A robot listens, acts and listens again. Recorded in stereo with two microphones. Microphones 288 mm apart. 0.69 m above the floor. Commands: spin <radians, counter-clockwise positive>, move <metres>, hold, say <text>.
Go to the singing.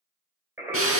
spin -0.52
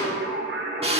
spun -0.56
spin -2.44
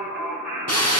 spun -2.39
move 1.0
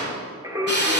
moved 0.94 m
spin -0.17
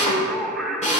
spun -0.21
move 1.0
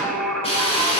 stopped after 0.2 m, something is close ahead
say Arrived at the singing, straight ahead.